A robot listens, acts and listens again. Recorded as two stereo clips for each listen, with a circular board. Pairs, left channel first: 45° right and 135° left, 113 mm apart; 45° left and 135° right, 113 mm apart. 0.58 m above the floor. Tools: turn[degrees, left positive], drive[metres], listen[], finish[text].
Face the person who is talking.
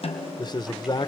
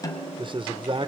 Thought: The man speaking: 95° right.
Action: turn[-95]
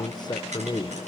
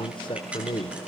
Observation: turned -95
Action: finish[Found it: a man speaking, straight ahead, 1 to 2 m away.]